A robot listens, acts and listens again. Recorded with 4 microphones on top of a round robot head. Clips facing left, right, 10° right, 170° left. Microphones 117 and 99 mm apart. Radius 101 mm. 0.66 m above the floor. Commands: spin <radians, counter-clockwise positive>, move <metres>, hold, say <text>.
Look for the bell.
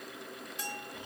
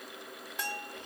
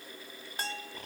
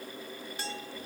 spin -0.96
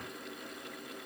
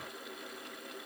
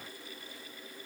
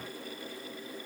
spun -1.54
spin 0.52
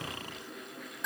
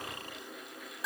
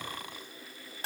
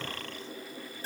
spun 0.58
say Facing the bell.